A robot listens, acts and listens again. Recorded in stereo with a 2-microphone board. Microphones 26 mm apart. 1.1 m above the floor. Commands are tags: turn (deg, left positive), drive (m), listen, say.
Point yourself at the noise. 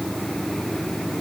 <listen/>
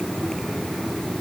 <listen/>
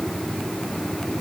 <say>I can't make out anything.</say>